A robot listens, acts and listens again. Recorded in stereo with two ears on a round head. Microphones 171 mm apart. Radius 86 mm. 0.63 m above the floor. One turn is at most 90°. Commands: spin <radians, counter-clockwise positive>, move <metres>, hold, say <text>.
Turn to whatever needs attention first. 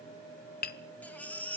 spin 0.52
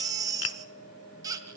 spin -0.35
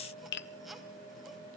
hold
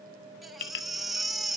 say Found it: a baby crying, straight ahead.